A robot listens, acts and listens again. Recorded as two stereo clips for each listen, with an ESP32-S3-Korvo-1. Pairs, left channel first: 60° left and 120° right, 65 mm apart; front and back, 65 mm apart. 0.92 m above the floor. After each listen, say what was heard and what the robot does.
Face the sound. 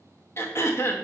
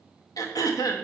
The throat clearing: 15° left. Turn 15° left.
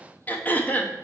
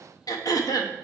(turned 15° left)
Found it: throat clearing, straight ahead, under 1 m away.